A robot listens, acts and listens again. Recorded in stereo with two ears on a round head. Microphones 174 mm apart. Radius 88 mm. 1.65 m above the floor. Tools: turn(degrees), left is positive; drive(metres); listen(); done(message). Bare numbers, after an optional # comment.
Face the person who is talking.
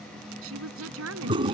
turn(-90)
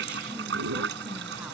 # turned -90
listen()
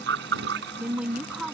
done("Found it: a woman speaking, straight ahead.")